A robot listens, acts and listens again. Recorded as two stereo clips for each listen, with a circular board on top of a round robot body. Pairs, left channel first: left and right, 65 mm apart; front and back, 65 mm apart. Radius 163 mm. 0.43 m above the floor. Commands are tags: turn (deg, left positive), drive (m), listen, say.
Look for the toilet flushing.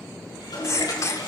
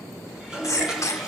<turn deg="100"/>
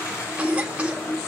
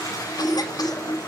<turn deg="40"/>
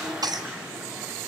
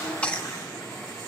<turn deg="-15"/>
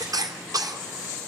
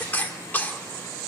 <listen/>
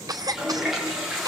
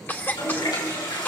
<say>Found it: a toilet flushing, straight ahead.</say>